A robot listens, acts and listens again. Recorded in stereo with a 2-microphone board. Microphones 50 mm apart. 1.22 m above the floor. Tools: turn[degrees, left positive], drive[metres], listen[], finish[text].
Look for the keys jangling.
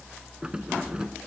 Thought: The keys jangling: about 15° right or 165° right.
Action: turn[-15]
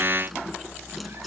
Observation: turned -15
Action: listen[]
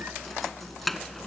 Action: turn[30]
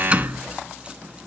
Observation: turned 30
Thought: So it is at 25° right.
Action: turn[-25]
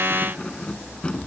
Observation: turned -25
Thought: The keys jangling is now 20° left.
Action: turn[20]
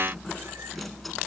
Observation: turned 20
Action: listen[]
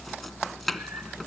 Action: finish[Found it: keys jangling, straight ahead.]